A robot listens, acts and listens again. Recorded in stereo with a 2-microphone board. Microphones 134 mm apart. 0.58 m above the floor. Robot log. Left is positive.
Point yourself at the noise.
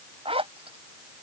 note: The zipper: about 45° right or 135° right.
cmd yaw -45
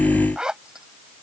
end: Found it: a zipper, straight ahead.